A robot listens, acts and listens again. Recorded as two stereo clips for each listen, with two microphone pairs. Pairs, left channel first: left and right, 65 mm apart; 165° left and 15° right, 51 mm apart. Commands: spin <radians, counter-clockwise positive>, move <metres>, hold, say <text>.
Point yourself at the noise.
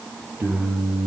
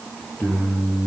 spin -2.44
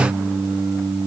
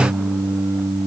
spin -0.35
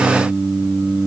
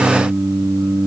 say Found it: singing, straight ahead.